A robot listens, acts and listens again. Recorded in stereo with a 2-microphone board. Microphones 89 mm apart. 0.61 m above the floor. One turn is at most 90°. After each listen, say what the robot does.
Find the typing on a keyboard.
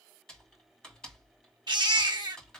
Turn 30° left.
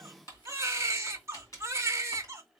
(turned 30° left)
Turn 90° left.
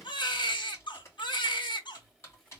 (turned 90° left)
Turn 35° left.
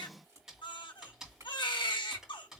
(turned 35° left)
Facing the typing on a keyboard, 1 to 2 m away.